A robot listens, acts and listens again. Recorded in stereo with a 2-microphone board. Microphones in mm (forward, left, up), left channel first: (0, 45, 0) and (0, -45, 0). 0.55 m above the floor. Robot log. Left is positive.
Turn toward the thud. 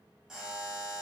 cmd idle
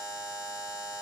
cmd idle
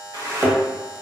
note: The thud: about 40° right or 140° right.
cmd yaw -40
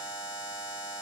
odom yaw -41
cmd idle
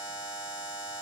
end: I heard a thud, but can't make it out now. It was about straight ahead or 100° right.